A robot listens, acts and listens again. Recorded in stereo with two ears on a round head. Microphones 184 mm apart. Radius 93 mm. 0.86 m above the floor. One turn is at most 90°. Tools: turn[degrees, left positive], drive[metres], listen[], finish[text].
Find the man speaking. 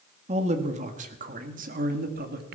Thought: The man speaking: about 45° right or 135° right.
Action: turn[-45]
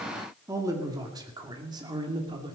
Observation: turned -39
Thought: So it is at 20° right.
Action: turn[-20]
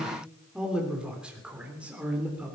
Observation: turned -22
Action: finish[Found it: a man speaking, straight ahead, 2 to 4 m away.]